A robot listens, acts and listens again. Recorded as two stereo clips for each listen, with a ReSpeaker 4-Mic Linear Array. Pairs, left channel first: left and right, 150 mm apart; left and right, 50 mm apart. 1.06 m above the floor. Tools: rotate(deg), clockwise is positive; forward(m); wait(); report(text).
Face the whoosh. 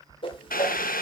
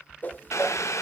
rotate(-35)
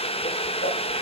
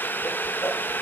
wait()
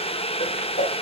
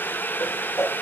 rotate(-105)
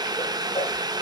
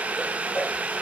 wait()
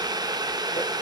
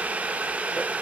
wait()
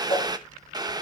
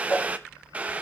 rotate(-40)
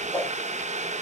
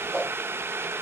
rotate(-15)
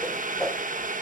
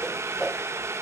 report("Facing the whoosh, 1 to 2 m away.")